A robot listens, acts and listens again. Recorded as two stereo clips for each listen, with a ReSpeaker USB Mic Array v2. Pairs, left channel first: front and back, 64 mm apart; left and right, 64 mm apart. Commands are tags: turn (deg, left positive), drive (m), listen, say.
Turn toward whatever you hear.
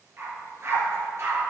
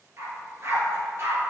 <turn deg="-140"/>
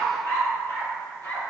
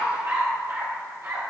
<turn deg="-50"/>
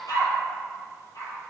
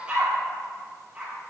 <turn deg="-20"/>
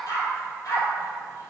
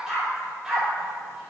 <turn deg="-10"/>
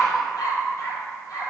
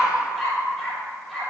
<say>Found it: a dog barking, straight ahead.</say>